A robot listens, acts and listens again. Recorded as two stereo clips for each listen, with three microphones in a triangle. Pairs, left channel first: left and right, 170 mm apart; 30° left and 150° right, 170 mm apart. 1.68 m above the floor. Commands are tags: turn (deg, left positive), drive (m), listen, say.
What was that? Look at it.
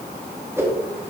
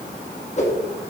<turn deg="-15"/>
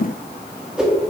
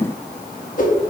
<say>Facing the whoosh.</say>